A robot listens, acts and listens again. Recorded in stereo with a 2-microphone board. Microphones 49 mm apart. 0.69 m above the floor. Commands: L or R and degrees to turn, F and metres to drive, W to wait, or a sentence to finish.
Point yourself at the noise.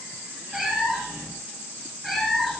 L30
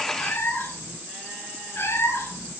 L125
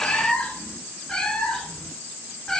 L15
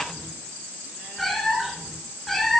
Found it: a cat meowing, straight ahead, 2 to 4 m away.